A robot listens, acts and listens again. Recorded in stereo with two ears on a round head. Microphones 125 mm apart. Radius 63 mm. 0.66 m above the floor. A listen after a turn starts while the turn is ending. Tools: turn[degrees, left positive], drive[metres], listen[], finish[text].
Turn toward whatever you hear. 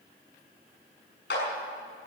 Action: turn[90]
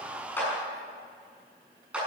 Thought: So it is at 10° right.
Action: turn[-10]
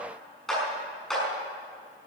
Action: finish[Found it: a clap, straight ahead, over 4 m away.]